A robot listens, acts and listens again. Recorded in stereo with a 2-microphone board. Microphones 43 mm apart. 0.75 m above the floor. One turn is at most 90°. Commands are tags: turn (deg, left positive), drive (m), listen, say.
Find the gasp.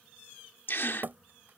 <turn deg="65"/>
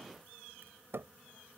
<listen/>
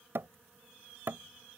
<say>I heard a gasp, but can't make it out now. It was about straight ahead or 50° left.</say>